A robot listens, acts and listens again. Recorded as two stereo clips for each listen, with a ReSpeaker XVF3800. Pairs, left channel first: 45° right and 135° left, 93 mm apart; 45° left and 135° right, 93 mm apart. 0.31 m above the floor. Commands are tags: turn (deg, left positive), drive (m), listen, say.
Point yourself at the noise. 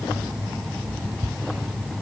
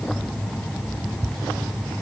<listen/>
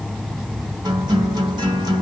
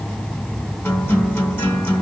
<turn deg="110"/>
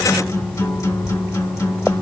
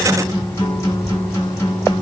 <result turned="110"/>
<say>Found it: a guitar, straight ahead.</say>